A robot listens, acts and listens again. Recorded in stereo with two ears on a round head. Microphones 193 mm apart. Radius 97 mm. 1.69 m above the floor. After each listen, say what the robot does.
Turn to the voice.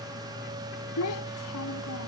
Turn 90° left.
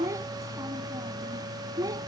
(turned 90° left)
Turn 15° right.
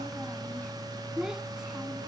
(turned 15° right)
Facing the child speaking.